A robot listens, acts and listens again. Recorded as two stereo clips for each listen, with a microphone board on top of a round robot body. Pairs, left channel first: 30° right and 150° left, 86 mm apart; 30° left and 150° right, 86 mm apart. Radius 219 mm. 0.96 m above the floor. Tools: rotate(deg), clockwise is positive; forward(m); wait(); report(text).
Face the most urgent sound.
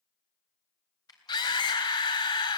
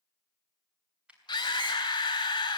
rotate(10)
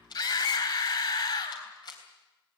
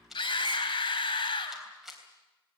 report("Facing the scream, over 4 m away.")